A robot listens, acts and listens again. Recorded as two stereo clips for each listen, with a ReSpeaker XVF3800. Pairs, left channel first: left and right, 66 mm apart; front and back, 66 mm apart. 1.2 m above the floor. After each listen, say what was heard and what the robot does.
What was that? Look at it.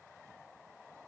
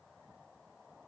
Keep listening.
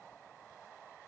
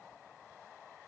Keep listening.
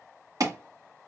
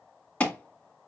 The alarm: 65° right. Turn 65° right.
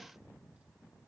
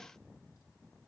Keep listening.
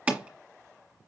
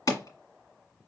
The alarm is now 20° right. Turn 20° right.
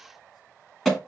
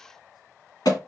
Found it: an alarm, straight ahead.